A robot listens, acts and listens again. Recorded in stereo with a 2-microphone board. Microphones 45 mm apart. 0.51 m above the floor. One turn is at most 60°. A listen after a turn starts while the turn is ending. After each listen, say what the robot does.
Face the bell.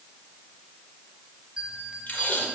Turn 20° right.
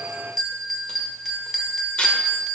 Found it: a bell, straight ahead, 1 to 2 m away.